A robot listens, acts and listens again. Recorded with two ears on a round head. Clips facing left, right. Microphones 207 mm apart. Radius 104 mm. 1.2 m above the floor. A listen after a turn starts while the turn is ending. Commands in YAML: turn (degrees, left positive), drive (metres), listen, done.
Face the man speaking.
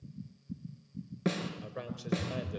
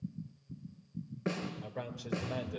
turn: 30
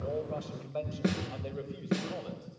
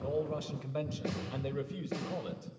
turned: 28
turn: -25
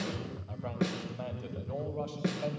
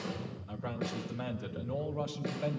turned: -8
turn: -20
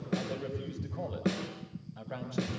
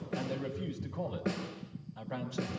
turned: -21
done: "Facing the man speaking, over 4 m away."